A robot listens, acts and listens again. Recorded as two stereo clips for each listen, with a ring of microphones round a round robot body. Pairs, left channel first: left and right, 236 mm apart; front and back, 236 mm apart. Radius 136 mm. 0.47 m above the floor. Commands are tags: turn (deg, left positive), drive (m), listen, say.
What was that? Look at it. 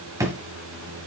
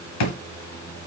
<turn deg="-10"/>
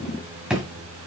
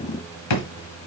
<say>Facing the drawer, 1 to 2 m away.</say>